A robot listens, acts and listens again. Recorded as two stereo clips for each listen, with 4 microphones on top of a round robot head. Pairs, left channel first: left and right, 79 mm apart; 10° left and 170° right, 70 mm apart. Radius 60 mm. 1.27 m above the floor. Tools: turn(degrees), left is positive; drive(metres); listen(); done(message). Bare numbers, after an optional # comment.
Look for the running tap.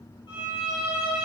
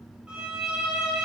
listen()
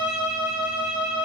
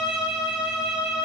listen()
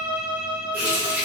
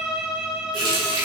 # The running tap: 165° right.
turn(-165)
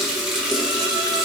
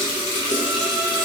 done("Facing the running tap, under 1 m away.")